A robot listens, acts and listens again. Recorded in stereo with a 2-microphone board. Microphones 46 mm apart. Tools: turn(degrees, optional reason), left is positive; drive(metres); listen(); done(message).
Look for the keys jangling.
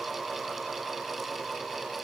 listen()
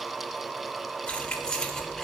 turn(degrees=30)
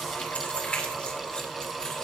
turn(degrees=25, reason="The keys jangling: about 25° left or 155° left.")
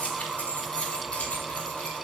turn(degrees=25, reason="The keys jangling: about 25° left or 155° left.")
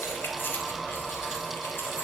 turn(degrees=130, reason="So it is at 130° left.")
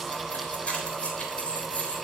turn(degrees=30, reason="The keys jangling is now 30° left.")
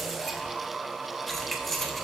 done("Found it: keys jangling, straight ahead.")